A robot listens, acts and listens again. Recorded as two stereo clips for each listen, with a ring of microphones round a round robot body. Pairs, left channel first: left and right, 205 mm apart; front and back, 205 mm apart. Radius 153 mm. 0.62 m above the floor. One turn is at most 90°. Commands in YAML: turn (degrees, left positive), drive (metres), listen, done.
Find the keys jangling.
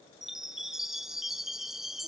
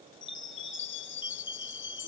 listen: true
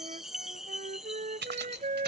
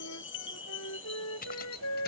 turn: -55
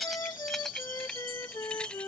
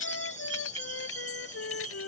listen: true
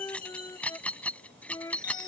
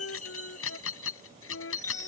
done: "Found it: keys jangling, straight ahead."